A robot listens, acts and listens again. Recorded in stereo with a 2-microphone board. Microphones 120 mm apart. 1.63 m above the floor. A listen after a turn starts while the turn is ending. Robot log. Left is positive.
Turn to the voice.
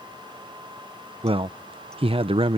note: The man speaking: about 55° right or 125° right.
cmd yaw -55
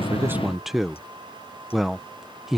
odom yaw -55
end: Found it: a man speaking, straight ahead.